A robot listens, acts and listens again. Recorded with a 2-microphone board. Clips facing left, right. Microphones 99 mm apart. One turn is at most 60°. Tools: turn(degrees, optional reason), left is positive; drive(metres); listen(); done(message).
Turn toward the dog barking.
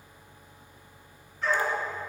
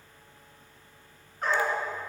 turn(degrees=-50, reason="The dog barking: about 50° right or 130° right.")
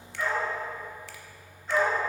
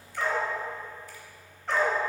turn(degrees=-60, reason="So it is at 80° right.")
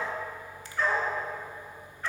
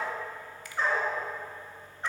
turn(degrees=-20, reason="The dog barking is now 20° right.")
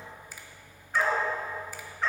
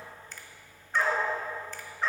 done("Facing the dog barking, 2 to 4 m away.")